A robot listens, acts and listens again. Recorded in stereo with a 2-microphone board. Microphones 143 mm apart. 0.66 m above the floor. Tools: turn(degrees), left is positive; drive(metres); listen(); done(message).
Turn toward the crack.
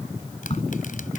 turn(degrees=45)
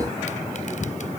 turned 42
listen()
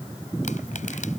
done("I heard a crack, but can't make it out now. It was about 5° left or 90° left.")